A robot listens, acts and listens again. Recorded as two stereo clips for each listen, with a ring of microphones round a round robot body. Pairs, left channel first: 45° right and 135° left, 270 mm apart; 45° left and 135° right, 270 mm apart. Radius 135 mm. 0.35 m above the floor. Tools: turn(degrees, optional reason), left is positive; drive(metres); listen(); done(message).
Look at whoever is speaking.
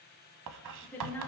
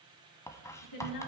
turn(degrees=40, reason="The woman speaking: 40° left.")
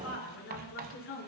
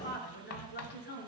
done("Facing the woman speaking.")